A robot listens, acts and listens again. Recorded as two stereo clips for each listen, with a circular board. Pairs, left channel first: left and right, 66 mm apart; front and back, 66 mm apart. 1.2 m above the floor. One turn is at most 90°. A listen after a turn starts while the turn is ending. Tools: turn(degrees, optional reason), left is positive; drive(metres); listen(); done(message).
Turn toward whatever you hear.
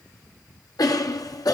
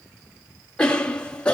turn(degrees=75, reason="The cough: 75° left.")
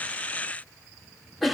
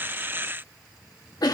done("Found it: a cough, straight ahead, 1 to 2 m away.")